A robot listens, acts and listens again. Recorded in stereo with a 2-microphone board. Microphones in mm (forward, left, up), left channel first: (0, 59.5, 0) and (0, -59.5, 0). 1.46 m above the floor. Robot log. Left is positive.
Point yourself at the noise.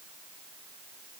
cmd idle
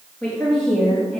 cmd yaw +30
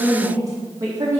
note: So it is at 35° right.
cmd yaw -35
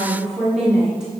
end: Facing the woman speaking, 1 to 2 m away.